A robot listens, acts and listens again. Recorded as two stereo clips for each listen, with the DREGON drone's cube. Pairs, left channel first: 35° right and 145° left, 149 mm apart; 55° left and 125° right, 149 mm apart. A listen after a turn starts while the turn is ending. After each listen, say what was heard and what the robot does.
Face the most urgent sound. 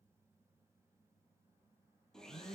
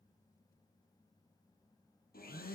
Keep listening.
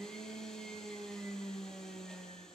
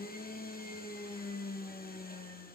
Keep listening.
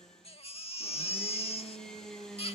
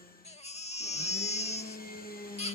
The baby crying: 15° left. Turn 15° left.
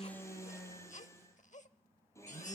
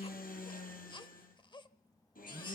Facing the baby crying.